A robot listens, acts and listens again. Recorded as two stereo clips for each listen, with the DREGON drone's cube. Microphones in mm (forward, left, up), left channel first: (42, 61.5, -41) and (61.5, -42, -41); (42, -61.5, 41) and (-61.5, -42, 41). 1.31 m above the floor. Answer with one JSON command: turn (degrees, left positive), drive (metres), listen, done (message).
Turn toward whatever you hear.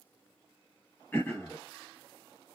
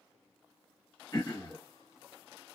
{"turn": 30}
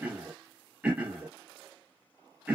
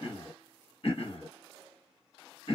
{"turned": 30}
{"done": "Facing the throat clearing."}